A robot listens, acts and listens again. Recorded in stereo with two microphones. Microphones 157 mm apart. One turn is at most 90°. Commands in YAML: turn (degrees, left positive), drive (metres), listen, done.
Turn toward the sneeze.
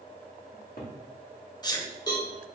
turn: 25
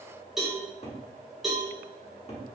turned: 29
listen: true
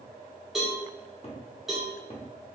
done: "I heard a sneeze, but can't make it out now. It was about 5° right or 125° left."